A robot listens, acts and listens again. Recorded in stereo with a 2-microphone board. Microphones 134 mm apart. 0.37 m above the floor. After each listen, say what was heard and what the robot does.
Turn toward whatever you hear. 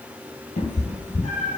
Turn 90° left.
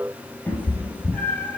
So it is at 15° left. Turn 15° left.
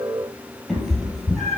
Found it: a cat meowing, straight ahead, 1 to 2 m away.